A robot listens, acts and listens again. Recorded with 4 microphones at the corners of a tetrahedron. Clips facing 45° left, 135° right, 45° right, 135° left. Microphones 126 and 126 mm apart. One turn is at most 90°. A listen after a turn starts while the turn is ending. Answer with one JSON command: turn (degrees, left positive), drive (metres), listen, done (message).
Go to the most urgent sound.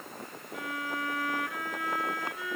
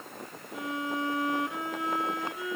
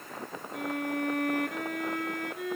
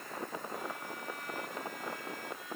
{"listen": true}
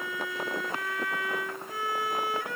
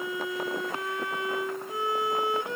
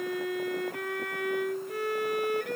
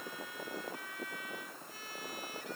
{"listen": true}
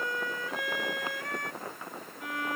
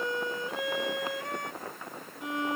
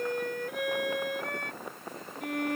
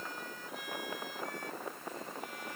{"done": "I can't make out anything urgent to turn to."}